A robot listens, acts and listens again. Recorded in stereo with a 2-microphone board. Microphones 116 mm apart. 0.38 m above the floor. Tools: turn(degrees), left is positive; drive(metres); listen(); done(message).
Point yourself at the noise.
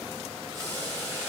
turn(degrees=20)
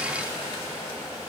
turn(degrees=140)
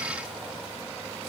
listen()
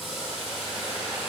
done("Found it: boiling, straight ahead.")